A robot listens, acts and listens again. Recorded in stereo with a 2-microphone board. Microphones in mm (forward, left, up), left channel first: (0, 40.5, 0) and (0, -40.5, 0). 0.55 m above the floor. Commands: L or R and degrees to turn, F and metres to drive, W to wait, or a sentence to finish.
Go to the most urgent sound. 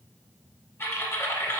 W
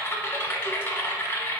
W
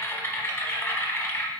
I can't make out anything urgent to turn to.